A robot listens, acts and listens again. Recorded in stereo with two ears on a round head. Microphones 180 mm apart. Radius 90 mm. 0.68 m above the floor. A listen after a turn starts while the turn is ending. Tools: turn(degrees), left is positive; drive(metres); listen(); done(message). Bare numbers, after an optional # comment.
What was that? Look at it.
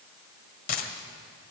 # The dropped coin: about 45° left or 135° left.
turn(45)
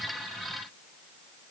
listen()
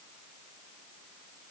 done("I heard a dropped coin, but can't make it out now. It was about straight ahead or 90° left.")